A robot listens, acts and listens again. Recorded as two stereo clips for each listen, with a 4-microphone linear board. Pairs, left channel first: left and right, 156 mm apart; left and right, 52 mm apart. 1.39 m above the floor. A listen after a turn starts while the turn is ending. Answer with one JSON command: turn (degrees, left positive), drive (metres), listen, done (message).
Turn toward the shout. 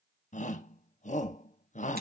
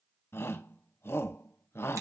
{"turn": 50}
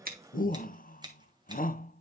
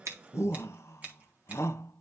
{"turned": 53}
{"turn": 70}
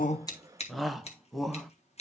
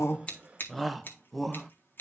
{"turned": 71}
{"done": "Facing the shout."}